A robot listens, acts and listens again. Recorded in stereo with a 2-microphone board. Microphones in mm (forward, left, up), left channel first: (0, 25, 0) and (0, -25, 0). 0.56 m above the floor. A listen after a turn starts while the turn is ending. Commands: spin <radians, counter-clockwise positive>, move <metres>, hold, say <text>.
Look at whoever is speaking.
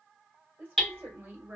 spin -0.61
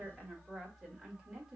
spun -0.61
spin -0.17
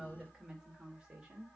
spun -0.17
spin -0.35
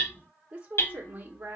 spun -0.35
spin -0.52
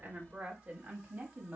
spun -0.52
spin -0.35
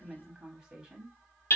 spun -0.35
spin -0.17
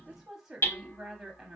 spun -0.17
say Facing the woman speaking.